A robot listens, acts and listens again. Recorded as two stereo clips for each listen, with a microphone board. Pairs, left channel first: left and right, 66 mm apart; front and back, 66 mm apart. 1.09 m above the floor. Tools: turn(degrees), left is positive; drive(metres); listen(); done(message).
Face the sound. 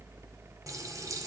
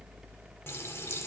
turn(degrees=-55)
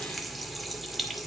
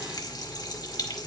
done("Facing the running tap, 2 to 4 m away.")